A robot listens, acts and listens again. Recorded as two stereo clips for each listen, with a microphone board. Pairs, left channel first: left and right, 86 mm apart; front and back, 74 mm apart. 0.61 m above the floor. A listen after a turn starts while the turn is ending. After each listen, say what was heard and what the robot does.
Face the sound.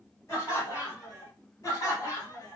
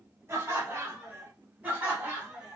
The laughter: 110° left. Turn 110° left.
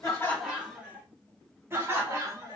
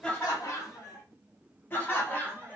The laughter is now 60° right. Turn 60° right.
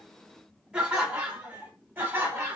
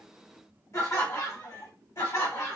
The laughter is now 35° right. Turn 35° right.
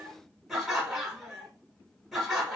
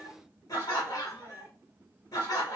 Found it: laughter, straight ahead, 1 to 2 m away.